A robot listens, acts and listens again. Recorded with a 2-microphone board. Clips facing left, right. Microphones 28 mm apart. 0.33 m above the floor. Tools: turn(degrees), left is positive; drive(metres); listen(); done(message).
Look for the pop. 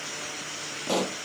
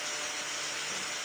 turn(degrees=90)
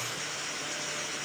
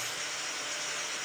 done("Facing where the pop came from. I can't hear it now.")